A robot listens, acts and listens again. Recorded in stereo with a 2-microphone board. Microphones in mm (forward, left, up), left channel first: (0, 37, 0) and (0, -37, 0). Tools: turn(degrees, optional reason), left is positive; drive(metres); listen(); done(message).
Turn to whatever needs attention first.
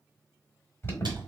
turn(degrees=35, reason="The alarm: about 35° left or 145° left.")
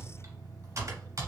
listen()
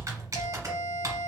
turn(degrees=105, reason="So it is at 105° left.")
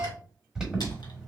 turn(degrees=-15, reason="The alarm is now 15° right.")
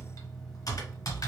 listen()
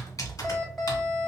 done("Found it: an alarm, straight ahead.")